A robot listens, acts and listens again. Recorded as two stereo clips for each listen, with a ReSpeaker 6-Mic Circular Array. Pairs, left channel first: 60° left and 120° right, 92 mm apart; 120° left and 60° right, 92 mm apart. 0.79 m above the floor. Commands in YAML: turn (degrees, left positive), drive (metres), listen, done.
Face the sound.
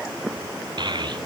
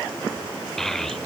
turn: -155
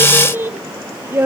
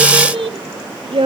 turn: -55
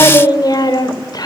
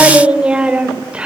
turn: 15
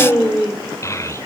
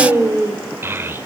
done: "Facing the child speaking."